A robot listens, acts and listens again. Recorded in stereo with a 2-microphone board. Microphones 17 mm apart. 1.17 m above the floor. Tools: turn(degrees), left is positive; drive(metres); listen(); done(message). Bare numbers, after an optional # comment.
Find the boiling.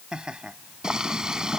# The boiling: about 45° right or 135° right.
turn(-45)
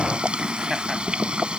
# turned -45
# So it is at 90° right.
turn(-90)
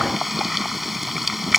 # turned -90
# The boiling is now 10° right.
turn(-10)
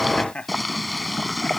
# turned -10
done("Found it: boiling, straight ahead.")